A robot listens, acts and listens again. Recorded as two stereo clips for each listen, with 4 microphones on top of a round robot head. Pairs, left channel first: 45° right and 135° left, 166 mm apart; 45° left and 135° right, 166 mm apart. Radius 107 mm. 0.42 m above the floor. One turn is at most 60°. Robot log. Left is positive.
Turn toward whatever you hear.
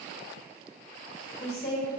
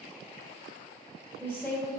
note: The woman speaking: 35° right.
cmd yaw -35
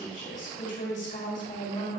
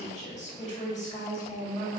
end: Facing the woman speaking, 2 to 4 m away.